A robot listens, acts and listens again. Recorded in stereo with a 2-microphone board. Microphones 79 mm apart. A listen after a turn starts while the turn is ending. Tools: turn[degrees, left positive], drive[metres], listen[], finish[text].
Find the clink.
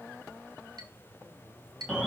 Thought: The clink: about 60° right or 120° right.
Action: turn[-60]
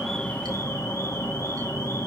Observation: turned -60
Action: listen[]
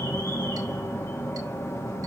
Action: listen[]
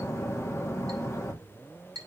Thought: So it is at 60° right.
Action: turn[-60]
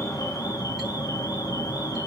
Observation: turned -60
Action: listen[]
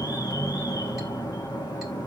Action: listen[]
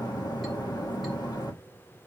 Action: finish[Facing where the clink came from. I can't hear it now.]